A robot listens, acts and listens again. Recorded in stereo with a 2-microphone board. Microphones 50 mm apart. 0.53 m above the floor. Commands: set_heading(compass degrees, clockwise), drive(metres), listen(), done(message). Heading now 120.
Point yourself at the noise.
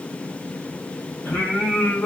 set_heading(50)
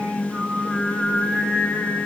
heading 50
set_heading(20)
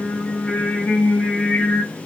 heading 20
set_heading(350)
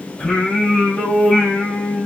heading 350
set_heading(325)
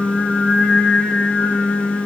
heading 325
set_heading(310)
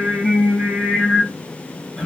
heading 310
done("Found it: singing, straight ahead.")